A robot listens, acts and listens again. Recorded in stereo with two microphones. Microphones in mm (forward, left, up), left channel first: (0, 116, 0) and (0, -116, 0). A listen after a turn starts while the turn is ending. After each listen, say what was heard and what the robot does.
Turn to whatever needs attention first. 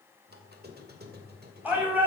Turn 30° right.
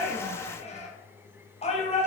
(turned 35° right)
So it is at 25° left. Turn 25° left.
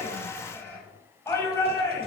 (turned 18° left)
The shout is now 10° left. Turn 10° left.
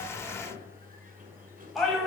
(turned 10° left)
Facing the shout, over 4 m away.